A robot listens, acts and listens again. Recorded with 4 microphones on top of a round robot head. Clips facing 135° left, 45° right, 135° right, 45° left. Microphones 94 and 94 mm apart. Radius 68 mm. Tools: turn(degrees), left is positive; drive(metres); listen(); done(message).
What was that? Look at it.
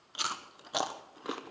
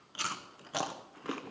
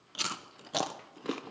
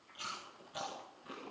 turn(degrees=-150)
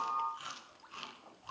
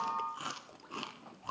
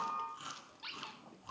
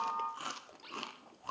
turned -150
done("Facing the chewing, under 1 m away.")